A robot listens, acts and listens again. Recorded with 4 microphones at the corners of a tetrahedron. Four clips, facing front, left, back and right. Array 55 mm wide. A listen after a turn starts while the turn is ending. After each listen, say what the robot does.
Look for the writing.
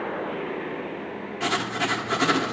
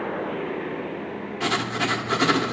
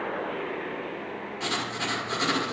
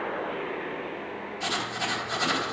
Turn 70° left.
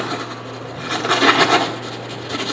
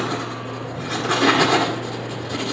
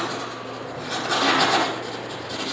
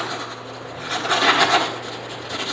Facing the writing.